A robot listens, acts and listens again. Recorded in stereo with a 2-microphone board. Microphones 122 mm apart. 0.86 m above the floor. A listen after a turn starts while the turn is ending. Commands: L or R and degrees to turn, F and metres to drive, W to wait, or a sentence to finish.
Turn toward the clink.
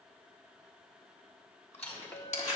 L30
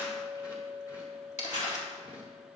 L135
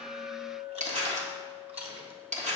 R15
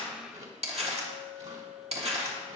Facing the clink, 1 to 2 m away.